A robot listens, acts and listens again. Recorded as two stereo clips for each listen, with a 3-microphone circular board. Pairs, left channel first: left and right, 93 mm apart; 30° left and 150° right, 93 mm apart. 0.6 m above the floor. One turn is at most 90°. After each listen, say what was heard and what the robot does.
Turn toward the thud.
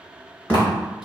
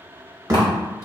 The thud: 160° left. Turn 90° left.
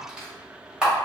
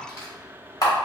Nothing new. It was at 70° left. Turn 70° left.
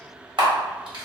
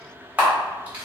I heard a thud from this way, but can't make it out now.